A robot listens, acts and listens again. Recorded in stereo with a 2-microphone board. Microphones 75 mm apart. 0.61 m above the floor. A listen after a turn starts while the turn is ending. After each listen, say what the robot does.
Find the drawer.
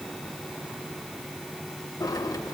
Turn 60° left.
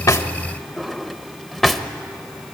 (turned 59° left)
Found it: a drawer, straight ahead, under 1 m away.